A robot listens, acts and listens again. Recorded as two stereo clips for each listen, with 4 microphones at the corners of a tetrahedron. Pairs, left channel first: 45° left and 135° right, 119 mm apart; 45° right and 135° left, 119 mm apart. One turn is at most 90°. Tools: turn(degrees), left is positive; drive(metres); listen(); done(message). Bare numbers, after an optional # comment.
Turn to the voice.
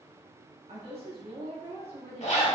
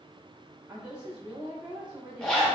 # The woman speaking: 145° right.
turn(-90)
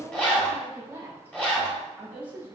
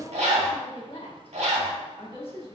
# The woman speaking is now 60° right.
turn(-60)
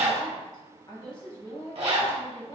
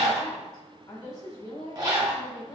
done("Found it: a woman speaking, straight ahead.")